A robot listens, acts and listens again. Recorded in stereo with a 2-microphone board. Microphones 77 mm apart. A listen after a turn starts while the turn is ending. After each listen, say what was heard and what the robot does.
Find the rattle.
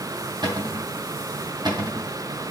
Keep listening.
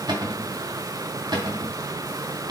Keep listening.
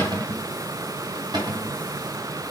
I can't make out a rattle to turn to.